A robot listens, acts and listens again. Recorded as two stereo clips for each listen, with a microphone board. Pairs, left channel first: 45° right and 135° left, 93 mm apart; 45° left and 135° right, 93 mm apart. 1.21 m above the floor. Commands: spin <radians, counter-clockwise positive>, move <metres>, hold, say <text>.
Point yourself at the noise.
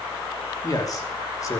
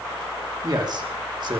spin -1.75
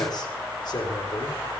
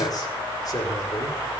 say Found it: a man speaking, straight ahead.